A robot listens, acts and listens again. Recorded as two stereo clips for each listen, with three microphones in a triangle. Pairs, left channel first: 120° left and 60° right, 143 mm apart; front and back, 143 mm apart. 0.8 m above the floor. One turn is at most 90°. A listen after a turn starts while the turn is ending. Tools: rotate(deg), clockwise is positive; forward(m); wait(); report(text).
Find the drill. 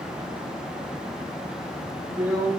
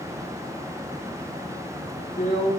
rotate(-15)
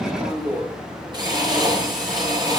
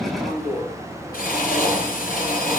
report("Facing the drill, over 4 m away.")